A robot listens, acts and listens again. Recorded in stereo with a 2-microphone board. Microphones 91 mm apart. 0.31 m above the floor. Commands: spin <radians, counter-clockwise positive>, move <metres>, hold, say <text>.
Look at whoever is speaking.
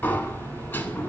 hold
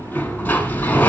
hold
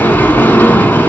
say I can't make out anyone speaking to turn to.